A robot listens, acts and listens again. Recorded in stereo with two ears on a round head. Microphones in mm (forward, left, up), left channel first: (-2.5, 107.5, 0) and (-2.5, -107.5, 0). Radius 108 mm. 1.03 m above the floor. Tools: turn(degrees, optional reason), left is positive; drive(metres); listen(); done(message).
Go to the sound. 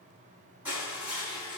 turn(degrees=-30)
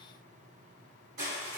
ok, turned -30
turn(degrees=-140, reason="So it is at 140° right.")
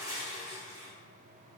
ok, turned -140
turn(degrees=-15, reason="The crushing is now 15° right.")
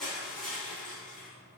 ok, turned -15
drive(metres=1.0)
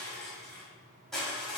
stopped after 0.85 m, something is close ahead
done("I am next to the crushing.")